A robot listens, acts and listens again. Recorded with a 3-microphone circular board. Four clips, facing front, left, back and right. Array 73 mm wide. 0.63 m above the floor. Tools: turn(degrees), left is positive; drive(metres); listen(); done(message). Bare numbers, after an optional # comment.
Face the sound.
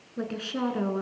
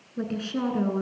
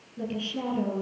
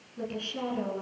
# The woman speaking: 30° left.
turn(30)
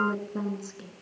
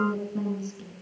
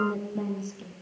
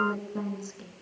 # The woman speaking is now 30° right.
turn(-30)
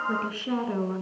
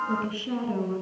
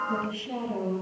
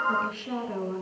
# The woman speaking is now 10° right.
turn(-10)
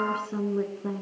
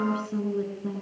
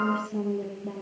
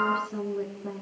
# The woman speaking is now 10° right.
turn(-10)
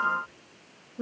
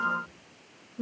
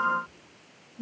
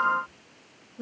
done("Found it: a woman speaking, straight ahead.")